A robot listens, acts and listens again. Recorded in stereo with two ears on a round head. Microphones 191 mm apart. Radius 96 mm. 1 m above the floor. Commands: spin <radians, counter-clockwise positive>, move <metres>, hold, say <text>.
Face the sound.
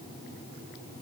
hold
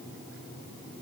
hold
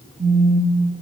spin -0.61
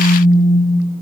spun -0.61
spin -0.17
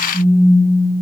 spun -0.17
say Facing the phone buzzing.